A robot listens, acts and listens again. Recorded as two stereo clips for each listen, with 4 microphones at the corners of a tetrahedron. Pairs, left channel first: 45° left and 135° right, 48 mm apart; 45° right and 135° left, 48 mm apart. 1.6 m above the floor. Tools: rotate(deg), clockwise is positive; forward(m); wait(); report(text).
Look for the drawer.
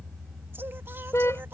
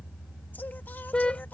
wait()
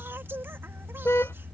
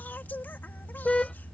wait()
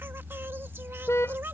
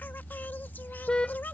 report("I can't make out a drawer to turn to.")